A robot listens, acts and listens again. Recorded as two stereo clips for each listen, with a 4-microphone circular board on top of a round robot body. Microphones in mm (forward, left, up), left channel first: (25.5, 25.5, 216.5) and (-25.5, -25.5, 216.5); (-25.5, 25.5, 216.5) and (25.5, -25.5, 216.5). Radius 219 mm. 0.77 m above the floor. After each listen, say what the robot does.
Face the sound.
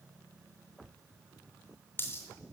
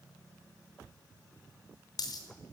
Turn 105° left.
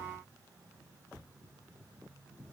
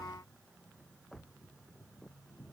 I heard a dropped coin from this way, but can't make it out now.